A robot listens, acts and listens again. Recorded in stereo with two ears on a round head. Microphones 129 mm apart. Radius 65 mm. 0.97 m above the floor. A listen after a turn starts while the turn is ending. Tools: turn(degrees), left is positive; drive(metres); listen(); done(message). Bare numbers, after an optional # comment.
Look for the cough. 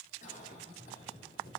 # The cough: about 55° left or 125° left.
turn(55)
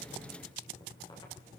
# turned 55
listen()
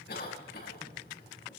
# So it is at 70° left.
turn(70)
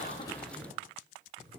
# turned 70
listen()
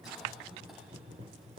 done("Facing the cough, over 4 m away.")